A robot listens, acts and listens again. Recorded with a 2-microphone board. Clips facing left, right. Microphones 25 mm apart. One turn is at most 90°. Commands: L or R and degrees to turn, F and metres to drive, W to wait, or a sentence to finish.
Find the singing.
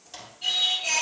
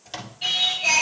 R40
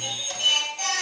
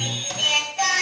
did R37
R90
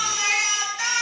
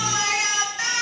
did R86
R15
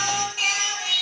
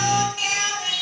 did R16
Facing the singing.